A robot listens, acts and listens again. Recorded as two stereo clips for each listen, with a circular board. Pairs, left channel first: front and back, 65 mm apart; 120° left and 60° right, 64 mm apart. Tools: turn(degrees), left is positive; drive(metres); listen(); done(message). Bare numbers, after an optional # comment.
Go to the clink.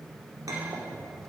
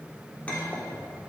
# The clink: 170° right.
turn(-170)
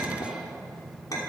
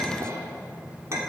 # The clink is now 20° right.
turn(-20)
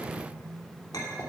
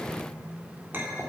drive(1.0)
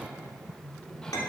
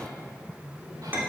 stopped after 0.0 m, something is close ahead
done("Blocked. The clink is further on, straight ahead.")